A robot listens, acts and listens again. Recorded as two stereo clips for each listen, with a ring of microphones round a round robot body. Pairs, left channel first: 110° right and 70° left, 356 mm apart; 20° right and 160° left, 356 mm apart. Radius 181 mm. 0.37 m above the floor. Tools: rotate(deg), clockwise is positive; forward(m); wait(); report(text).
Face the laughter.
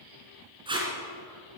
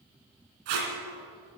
wait()
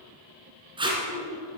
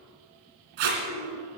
rotate(75)
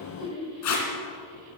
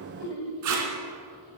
rotate(10)
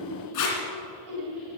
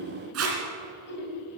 rotate(-40)
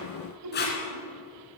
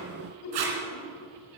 rotate(-25)
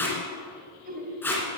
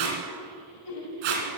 report("Found it: laughter, straight ahead, 2 to 4 m away.")